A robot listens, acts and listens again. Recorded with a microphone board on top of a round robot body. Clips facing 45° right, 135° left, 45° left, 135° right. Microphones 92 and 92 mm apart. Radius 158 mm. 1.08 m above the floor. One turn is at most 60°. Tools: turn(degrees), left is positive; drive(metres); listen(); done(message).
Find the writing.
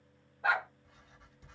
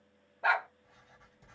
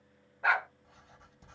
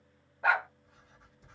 turn(degrees=60)
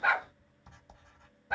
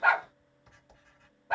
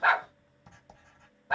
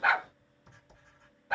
turn(degrees=25)
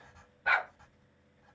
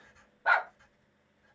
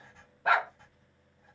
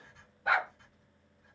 done("Found it: writing, straight ahead, 2 to 4 m away.")